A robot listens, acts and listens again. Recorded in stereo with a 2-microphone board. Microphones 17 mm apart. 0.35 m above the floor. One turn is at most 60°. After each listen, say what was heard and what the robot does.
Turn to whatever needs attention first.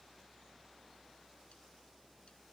Keep listening.
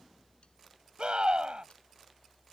The scream: about 55° right or 125° right. Turn 55° right.
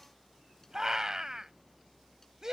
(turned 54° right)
So it is at 35° right. Turn 35° right.
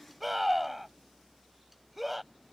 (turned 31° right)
Found it: a scream, straight ahead.